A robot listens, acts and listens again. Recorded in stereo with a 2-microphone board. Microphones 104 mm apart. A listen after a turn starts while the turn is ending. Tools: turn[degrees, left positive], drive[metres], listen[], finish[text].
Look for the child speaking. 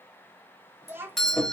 Thought: The child speaking: about 20° right or 160° right.
Action: turn[-20]
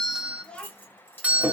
Thought: So it is at 10° left.
Action: turn[10]
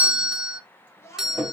Thought: The child speaking is now 25° left.
Action: turn[25]
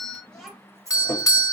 Action: listen[]
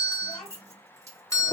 Action: finish[Facing the child speaking, 2 to 4 m away.]